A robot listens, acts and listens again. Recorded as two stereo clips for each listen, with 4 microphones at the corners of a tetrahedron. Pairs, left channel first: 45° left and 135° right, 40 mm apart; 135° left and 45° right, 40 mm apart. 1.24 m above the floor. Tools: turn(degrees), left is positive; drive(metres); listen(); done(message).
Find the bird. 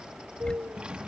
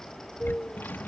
turn(degrees=-160)
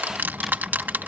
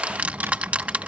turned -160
listen()
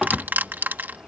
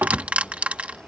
listen()
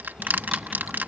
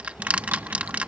done("Facing where the bird came from. I can't hear it now.")